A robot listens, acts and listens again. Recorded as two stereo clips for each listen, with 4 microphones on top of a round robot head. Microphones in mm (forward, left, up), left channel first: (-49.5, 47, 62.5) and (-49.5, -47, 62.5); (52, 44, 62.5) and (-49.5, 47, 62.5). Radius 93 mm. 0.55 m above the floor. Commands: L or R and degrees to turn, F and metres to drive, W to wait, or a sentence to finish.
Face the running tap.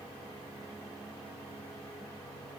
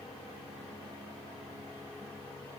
W
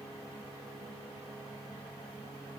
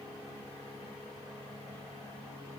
W
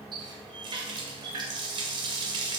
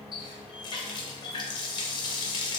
R50
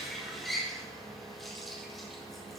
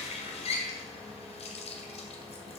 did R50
Facing the running tap.